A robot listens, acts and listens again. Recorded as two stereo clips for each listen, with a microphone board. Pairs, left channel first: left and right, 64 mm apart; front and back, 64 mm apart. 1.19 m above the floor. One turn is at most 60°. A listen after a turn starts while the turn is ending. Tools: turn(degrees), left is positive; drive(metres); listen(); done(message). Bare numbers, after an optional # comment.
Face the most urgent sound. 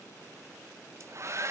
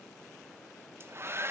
listen()
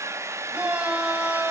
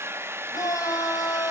# The shout: 15° right.
turn(-15)
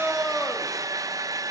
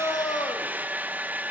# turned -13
done("Facing the shout.")